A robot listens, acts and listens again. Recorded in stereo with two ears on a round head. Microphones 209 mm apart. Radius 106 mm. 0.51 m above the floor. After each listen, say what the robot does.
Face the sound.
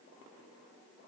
Keep listening.
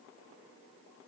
Keep listening.
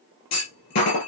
Turn 90° left.
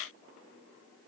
Facing where the clunk came from. I can't hear it now.